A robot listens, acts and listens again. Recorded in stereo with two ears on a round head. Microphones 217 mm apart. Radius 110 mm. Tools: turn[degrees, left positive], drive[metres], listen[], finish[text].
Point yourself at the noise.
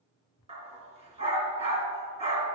Thought: The dog barking: about 25° right or 155° right.
Action: turn[-25]
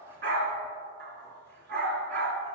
Thought: So it is at 130° right.
Action: turn[-130]
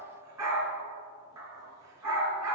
Thought: The dog barking is now 10° right.
Action: turn[-10]
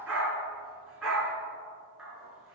Action: finish[Facing the dog barking, 2 to 4 m away.]